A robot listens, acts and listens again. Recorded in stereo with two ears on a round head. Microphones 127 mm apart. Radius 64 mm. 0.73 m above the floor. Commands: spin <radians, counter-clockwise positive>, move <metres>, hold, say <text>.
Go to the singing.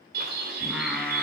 spin 0.52
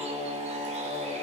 spin -0.52
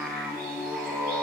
spin -0.17
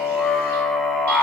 move 1.0
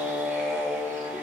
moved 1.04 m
move 1.0
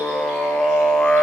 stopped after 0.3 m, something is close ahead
say Arrived at the singing, straight ahead.